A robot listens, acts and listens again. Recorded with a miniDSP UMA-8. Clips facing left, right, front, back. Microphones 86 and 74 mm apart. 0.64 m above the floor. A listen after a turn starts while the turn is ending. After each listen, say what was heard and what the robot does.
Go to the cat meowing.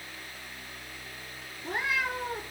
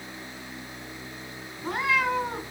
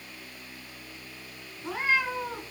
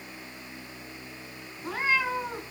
The cat meowing: 100° right. Turn 100° right.
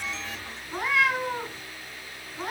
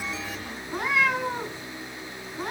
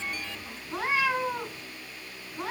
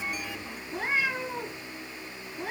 Drive 1.0 m forward.
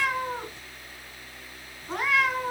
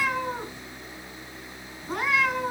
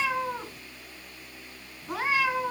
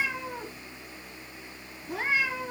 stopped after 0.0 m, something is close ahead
Something is in my way. I am facing the cat meowing but have not reached it.